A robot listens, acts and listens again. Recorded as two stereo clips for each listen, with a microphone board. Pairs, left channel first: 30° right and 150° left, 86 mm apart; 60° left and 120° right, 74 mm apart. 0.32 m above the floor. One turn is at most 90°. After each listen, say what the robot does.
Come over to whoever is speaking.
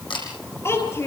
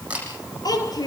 Turn 30° left.
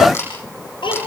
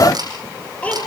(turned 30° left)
Turn 15° right.
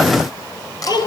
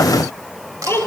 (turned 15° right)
Drive 1.0 m forward.
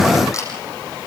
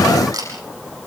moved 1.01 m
Keep listening.
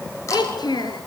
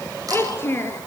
Drive 1.0 m forward.
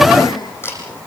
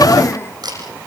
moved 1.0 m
Drive 1.0 m forward.
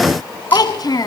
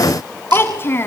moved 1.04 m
Drive 1.0 m forward.
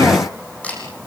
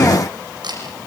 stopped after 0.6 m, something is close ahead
Keep listening.
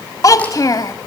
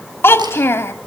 Turn 10° left.
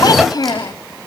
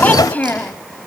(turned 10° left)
Arrived at the child speaking, straight ahead.